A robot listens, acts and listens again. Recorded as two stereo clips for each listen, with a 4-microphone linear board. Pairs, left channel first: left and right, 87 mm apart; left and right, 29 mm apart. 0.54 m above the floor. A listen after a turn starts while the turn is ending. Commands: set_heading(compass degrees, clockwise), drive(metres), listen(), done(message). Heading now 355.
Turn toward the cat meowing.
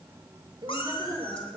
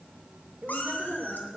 set_heading(265)
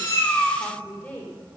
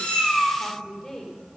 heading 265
done("Facing the cat meowing, 2 to 4 m away.")